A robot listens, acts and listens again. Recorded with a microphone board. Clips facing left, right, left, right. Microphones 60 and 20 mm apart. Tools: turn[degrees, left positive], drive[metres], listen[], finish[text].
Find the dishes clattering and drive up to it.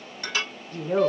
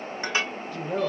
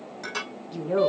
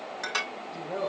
Thought: The dishes clattering: about 25° right or 155° right.
Action: turn[-25]
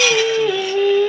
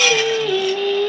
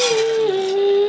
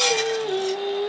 Action: listen[]
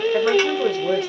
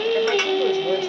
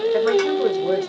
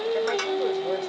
Action: listen[]
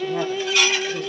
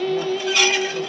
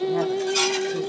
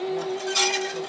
Action: drive[1.0]
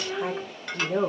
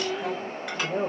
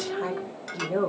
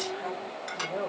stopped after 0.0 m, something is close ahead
Action: listen[]
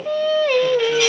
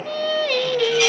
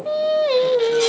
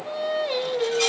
Action: listen[]
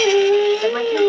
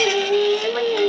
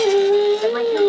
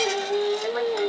Action: finish[I heard dishes clattering from this way, but can't make it out now. I did not reach it.]